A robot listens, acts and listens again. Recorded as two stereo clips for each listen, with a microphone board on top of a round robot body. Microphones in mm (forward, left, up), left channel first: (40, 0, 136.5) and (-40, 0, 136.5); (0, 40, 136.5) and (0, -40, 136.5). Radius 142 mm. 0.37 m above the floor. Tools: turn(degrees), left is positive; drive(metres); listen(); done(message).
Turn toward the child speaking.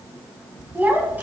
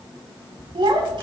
turn(degrees=-110)
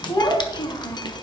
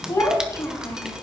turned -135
turn(degrees=35)
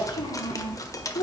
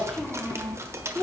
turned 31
done("Facing the child speaking.")